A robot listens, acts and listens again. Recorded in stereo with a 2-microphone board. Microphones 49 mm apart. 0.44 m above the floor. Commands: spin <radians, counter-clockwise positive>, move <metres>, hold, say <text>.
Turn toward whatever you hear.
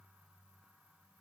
hold
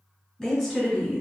spin 0.52
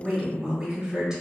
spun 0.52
spin -0.26
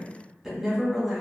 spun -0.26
say Facing the woman speaking.